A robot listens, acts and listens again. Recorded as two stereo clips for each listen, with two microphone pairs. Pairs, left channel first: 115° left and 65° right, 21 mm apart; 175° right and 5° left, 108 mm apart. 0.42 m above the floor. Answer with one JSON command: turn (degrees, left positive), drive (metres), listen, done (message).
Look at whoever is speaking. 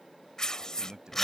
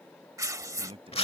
{"turn": -20}
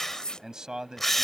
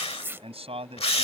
{"turn": -10}
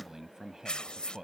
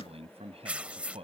{"done": "Facing the man speaking."}